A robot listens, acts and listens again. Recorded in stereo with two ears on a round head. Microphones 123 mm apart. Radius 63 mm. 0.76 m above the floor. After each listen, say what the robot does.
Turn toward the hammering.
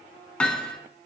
Turn 30° left.
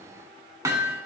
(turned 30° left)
Turn 20° right.
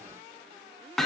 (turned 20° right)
Found it: hammering, straight ahead, 2 to 4 m away.